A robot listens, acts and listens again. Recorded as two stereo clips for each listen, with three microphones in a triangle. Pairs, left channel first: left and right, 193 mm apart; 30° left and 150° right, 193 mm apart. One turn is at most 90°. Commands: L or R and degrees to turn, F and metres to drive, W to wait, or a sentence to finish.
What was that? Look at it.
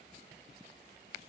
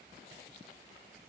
W
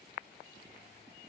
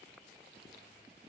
W
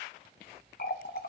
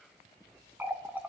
L90
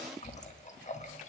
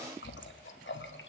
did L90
L40
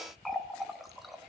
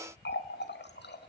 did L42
Facing the running tap.